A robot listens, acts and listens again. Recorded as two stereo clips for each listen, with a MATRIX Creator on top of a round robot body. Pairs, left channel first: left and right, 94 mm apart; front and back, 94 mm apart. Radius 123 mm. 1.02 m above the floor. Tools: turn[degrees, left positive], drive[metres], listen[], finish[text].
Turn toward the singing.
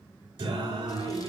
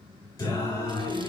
Thought: The singing: 60° right.
Action: turn[-60]
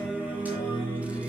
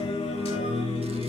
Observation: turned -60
Thought: The singing is now 20° right.
Action: turn[-20]
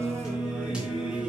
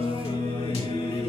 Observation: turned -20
Thought: The singing is now 10° right.
Action: turn[-10]
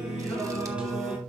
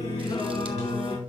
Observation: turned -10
Thought: The singing is now 15° right.
Action: turn[-15]
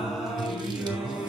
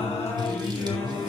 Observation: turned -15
Thought: The singing is now 10° right.
Action: turn[-10]
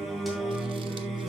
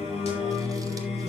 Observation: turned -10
Action: finish[Facing the singing, 2 to 4 m away.]